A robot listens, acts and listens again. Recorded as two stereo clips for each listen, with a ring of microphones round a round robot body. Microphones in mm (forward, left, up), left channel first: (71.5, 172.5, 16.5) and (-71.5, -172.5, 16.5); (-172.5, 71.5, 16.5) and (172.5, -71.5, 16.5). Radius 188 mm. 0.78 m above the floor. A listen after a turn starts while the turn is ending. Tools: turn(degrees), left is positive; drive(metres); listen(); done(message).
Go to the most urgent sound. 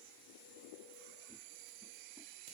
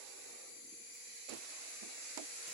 listen()
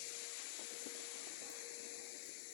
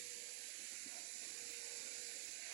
listen()
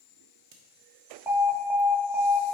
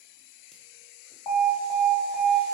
turn(degrees=165)
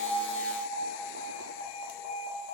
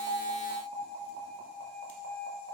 turn(degrees=15)
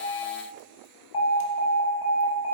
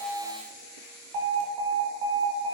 drive(metres=1.0)
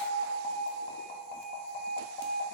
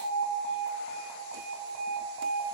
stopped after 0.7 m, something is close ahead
done("Arrived at the alarm, straight ahead.")